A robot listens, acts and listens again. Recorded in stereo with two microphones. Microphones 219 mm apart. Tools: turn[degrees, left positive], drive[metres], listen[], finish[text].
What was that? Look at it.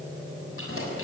Action: turn[90]
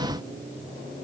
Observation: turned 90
Action: listen[]
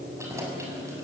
Thought: The keys jangling is now 15° right.
Action: turn[-15]
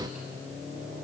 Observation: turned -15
Action: listen[]
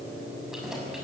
Action: listen[]
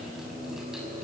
Action: finish[Facing where the keys jangling came from. I can't hear it now.]